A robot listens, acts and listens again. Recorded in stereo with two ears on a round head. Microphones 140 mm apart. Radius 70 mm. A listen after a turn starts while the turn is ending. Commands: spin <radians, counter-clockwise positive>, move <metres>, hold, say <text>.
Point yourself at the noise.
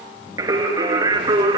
spin -0.44
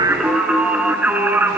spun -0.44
spin -0.52
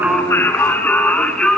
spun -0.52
say Found it: singing, straight ahead.